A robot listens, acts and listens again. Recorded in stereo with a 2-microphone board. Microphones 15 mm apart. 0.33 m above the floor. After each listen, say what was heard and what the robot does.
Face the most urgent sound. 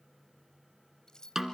Keep listening.
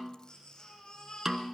The baby crying: about 55° left or 125° left. Turn 55° left.
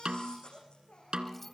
So it is at 75° left. Turn 75° left.
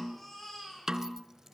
The baby crying is now 20° left. Turn 20° left.
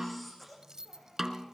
Facing the baby crying, over 4 m away.